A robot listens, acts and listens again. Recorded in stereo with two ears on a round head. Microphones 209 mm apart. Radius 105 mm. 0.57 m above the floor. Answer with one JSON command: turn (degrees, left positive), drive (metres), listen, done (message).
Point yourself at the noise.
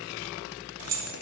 {"turn": -75}
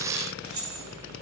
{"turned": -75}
{"turn": -15}
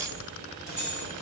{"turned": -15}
{"done": "Facing the keys jangling, 2 to 4 m away."}